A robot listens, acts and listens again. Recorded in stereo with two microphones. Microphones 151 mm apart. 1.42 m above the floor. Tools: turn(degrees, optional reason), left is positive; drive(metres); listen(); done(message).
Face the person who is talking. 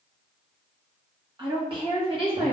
turn(degrees=-40, reason="The woman speaking: about 40° right or 140° right.")
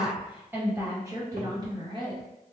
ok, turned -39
turn(degrees=-35, reason="The woman speaking: about 35° right or 145° right.")
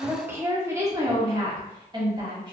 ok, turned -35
turn(degrees=-30, reason="So it is at 30° right.")
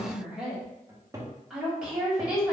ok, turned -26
done("Found it: a woman speaking, straight ahead, 1 to 2 m away.")